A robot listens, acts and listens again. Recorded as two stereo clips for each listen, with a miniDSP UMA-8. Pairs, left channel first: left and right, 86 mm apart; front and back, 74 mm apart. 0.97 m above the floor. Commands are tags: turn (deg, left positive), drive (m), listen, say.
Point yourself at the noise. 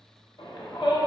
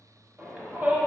<turn deg="110"/>
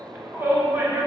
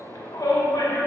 <turn deg="-25"/>
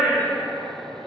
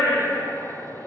<turn deg="-15"/>
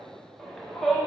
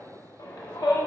<say>Found it: a shout, straight ahead.</say>